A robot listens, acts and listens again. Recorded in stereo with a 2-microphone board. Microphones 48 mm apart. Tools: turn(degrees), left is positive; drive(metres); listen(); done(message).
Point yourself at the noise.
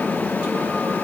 listen()
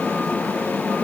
listen()
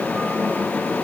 done("I can't make out anything.")